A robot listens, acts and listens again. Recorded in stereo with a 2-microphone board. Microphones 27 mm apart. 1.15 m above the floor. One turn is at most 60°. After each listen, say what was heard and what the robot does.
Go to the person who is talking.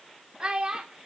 The child speaking: about 35° right or 145° right. Turn 35° right.
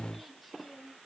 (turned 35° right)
Drive 1.0 m forward.
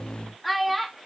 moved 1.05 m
Drive 1.0 m forward.
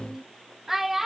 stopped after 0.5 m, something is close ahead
The child speaking is now 10° right. Turn 10° right.
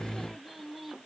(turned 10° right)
Keep listening.
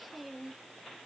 Keep listening.
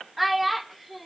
Arrived at the child speaking, straight ahead.